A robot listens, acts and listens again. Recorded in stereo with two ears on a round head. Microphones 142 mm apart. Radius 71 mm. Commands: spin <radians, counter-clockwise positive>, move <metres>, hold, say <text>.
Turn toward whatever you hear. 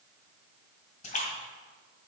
spin 0.87
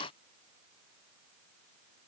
hold
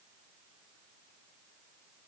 say I heard a splash, but can't make it out now. It was about straight ahead or 80° left.